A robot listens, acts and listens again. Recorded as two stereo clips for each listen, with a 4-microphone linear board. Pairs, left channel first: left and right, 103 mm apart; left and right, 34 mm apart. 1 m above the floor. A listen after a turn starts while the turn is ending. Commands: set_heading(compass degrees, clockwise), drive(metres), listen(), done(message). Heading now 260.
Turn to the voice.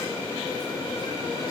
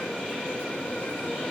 listen()
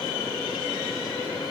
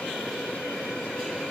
listen()
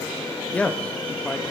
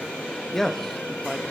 set_heading(230)
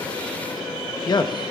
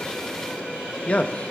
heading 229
set_heading(94)
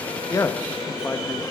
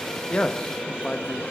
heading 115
set_heading(95)
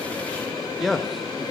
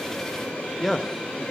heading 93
done("Facing the man speaking.")